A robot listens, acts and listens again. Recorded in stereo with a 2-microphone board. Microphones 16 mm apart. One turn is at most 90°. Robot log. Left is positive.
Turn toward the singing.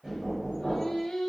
note: The singing: about 65° left or 115° left.
cmd yaw +65
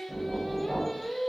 note: So it is at 15° left.
cmd yaw +15
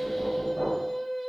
end: Found it: singing, straight ahead.